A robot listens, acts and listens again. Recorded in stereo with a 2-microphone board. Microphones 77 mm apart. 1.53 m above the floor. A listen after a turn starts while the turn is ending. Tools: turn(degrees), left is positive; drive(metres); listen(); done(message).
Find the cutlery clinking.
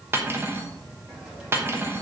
turn(degrees=-30)
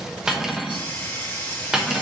turn(degrees=-10)
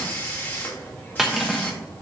done("Facing the cutlery clinking, 1 to 2 m away.")